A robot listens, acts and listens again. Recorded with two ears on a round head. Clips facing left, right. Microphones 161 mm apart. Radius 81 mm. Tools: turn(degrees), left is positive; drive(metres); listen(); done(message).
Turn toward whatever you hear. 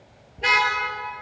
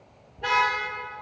turn(degrees=25)
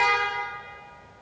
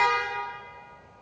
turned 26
done("Found it: a car horn, straight ahead, over 4 m away.")